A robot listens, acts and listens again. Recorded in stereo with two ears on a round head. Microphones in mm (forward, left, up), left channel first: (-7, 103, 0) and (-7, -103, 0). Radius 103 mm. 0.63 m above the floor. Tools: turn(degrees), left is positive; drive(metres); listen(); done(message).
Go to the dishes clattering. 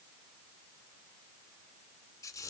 listen()
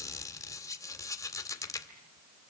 listen()
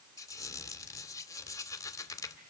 done("I can't make out dishes clattering to turn to.")